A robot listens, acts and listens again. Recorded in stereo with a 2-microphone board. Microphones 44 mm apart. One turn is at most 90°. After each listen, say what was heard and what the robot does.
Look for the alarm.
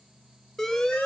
Turn 30° left.
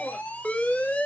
So it is at 130° left. Turn 90° left.
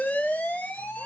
The alarm is now 45° left. Turn 45° left.
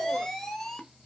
Facing the alarm, 1 to 2 m away.